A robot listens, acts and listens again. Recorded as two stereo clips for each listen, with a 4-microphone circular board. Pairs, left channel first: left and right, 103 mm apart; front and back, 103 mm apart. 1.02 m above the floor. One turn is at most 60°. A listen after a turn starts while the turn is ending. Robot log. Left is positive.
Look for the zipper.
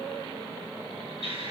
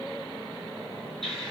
cmd idle
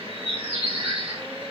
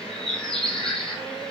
cmd idle
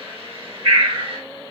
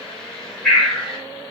end: I can't make out a zipper to turn to.